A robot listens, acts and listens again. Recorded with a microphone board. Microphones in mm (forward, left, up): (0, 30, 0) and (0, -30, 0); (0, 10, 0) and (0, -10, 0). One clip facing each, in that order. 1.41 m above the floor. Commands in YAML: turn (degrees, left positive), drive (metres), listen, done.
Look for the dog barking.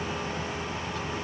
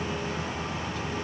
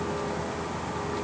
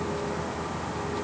listen: true
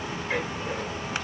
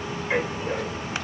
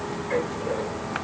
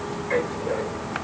turn: -20
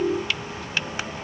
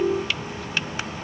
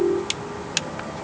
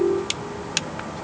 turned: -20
listen: true
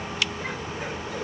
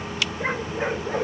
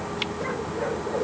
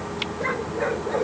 turn: -140
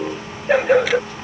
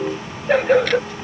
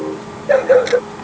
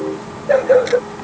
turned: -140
done: "Facing the dog barking."